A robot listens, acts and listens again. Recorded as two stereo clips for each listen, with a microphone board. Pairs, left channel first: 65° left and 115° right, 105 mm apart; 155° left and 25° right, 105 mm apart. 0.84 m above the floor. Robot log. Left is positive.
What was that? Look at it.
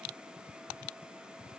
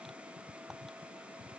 cmd idle
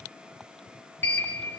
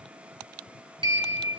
end: Found it: a sliding door, straight ahead.